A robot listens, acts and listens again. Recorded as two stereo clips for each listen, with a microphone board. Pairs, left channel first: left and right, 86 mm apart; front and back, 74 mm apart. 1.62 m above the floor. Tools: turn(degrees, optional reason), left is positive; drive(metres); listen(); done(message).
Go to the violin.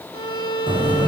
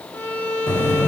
turn(degrees=65, reason="The violin: 65° left.")
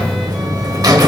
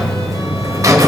listen()
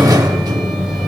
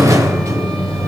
listen()
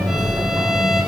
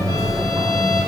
done("I heard a violin from this way, but can't make it out now. I did not reach it.")